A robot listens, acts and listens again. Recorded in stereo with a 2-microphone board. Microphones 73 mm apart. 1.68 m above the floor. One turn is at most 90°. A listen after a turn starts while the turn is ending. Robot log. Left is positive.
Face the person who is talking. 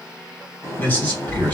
note: The man speaking: about 30° left or 150° left.
cmd yaw +30
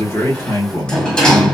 note: So it is at 115° left.
cmd yaw +90
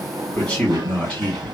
note: The man speaking is now 10° left.
cmd yaw +10
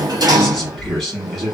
end: Facing the man speaking.